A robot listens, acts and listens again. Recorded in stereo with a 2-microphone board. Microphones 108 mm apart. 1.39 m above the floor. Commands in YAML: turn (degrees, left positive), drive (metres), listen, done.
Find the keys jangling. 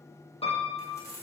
turn: 30
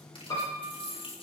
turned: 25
turn: 125
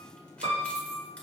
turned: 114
turn: 10
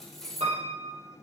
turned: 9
done: "Facing the keys jangling, over 4 m away."